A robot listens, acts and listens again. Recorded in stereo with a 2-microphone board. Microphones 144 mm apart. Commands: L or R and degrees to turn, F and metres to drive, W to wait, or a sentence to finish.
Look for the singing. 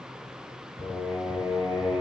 L25
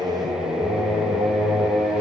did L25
Facing the singing.